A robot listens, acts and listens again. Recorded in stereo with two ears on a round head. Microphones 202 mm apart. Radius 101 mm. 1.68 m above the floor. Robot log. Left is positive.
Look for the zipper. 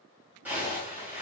cmd yaw -30
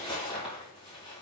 note: So it is at 25° left.
cmd yaw +25
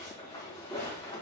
note: The zipper is now 20° left.
cmd yaw +20
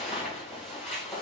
end: Facing the zipper.